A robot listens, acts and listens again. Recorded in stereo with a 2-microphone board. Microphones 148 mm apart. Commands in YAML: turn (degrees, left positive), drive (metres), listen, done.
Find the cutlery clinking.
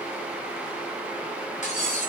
turn: 60
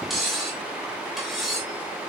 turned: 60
done: "Found it: cutlery clinking, straight ahead, 2 to 4 m away."